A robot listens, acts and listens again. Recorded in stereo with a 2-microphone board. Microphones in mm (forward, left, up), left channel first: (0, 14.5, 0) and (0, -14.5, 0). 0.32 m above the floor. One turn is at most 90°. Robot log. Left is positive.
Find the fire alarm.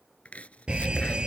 note: The fire alarm: about 35° right or 145° right.
cmd yaw -35
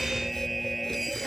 end: Facing the fire alarm.